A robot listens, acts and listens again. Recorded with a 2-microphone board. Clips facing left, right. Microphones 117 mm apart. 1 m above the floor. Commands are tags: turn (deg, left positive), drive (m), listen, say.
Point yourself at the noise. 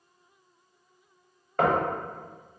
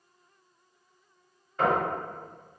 <turn deg="60"/>
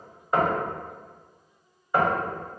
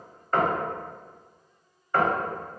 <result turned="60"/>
<turn deg="15"/>
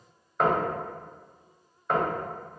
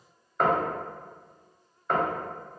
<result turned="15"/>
<say>Facing the knocking, under 1 m away.</say>